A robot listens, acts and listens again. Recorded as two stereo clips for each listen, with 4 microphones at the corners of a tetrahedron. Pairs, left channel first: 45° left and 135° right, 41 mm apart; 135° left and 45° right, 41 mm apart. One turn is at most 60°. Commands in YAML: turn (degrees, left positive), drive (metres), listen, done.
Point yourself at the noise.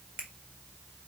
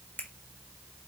turn: 60
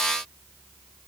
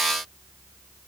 turn: 60
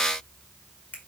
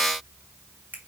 done: "Found it: a finger snap, straight ahead."